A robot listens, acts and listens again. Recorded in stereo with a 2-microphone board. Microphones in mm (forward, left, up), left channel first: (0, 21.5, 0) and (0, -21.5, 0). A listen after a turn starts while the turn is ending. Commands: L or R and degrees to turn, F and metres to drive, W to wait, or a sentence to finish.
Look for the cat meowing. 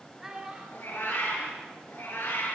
L65
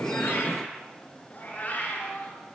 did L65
L40
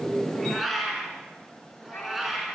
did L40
Facing the cat meowing.